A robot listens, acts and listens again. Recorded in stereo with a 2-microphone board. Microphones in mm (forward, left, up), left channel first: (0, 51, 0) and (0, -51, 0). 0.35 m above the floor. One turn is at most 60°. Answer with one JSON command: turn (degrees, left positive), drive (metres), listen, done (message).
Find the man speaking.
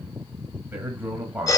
{"turn": -30}
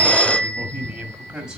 {"turn": -30}
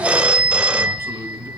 {"listen": true}
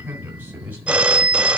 {"turn": -30}
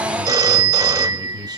{"turn": -60}
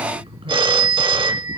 {"turn": -60}
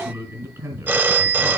{"turn": -25}
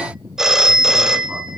{"listen": true}
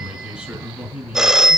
{"turn": -10}
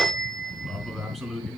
{"done": "Found it: a man speaking, straight ahead."}